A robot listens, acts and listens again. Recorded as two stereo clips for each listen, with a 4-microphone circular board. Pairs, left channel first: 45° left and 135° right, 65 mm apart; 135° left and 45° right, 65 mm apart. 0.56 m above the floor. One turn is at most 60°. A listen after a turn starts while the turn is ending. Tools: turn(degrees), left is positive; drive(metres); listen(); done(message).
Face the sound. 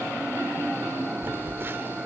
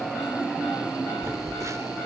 turn(degrees=-60)
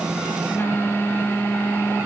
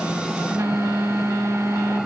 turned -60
turn(degrees=-10)
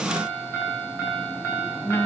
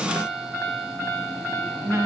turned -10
done("Facing the phone buzzing.")